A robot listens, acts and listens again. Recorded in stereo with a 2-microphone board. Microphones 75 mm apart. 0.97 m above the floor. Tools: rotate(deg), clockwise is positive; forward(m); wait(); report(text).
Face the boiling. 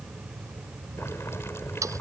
rotate(-35)
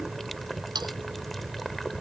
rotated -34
report("Found it: boiling, straight ahead.")